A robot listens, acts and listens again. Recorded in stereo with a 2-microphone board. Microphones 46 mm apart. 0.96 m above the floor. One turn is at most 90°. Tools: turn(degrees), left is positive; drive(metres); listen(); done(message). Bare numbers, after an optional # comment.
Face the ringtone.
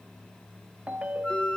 # The ringtone: about 25° right or 155° right.
turn(-25)
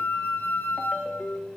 done("Found it: a ringtone, straight ahead.")